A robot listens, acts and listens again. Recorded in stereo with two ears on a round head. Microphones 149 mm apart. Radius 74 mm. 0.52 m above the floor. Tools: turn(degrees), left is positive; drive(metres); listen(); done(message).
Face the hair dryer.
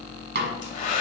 turn(degrees=45)
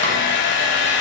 turn(degrees=85)
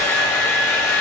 turn(degrees=20)
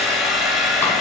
done("Found it: a hair dryer, straight ahead, 1 to 2 m away.")